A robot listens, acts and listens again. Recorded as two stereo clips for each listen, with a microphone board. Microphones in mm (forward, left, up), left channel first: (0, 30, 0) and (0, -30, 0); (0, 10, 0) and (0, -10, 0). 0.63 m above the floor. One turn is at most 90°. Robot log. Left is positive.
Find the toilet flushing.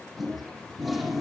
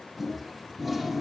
cmd yaw +30
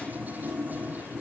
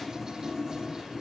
note: So it is at 30° right.
cmd yaw -30
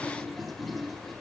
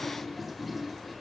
end: Found it: a toilet flushing, straight ahead, over 4 m away.